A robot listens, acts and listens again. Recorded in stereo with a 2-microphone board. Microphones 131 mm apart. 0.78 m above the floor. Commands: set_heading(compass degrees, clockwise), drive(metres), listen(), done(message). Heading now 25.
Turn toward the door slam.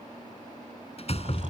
set_heading(335)
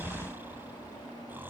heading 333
listen()
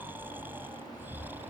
done("I heard a door slam, but can't make it out now. It was about straight ahead or 75° left.")